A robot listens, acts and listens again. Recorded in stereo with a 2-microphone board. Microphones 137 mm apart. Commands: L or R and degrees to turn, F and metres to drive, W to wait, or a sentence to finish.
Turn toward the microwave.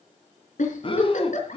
W
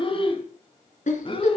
W
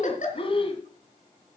I can't make out a microwave to turn to.